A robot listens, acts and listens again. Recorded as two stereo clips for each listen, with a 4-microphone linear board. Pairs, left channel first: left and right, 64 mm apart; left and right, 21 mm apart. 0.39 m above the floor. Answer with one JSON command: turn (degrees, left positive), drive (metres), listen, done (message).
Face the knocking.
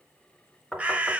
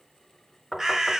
{"turn": 30}
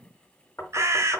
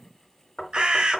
{"turn": 140}
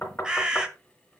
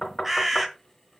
{"turn": 35}
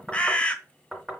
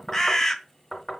{"done": "Facing the knocking, 2 to 4 m away."}